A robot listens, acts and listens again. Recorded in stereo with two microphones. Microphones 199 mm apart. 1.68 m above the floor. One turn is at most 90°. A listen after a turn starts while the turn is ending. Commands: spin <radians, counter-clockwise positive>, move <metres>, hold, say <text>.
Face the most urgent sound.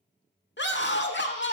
spin 1.13
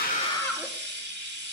spin 0.17
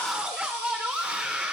say Facing the scream, 1 to 2 m away.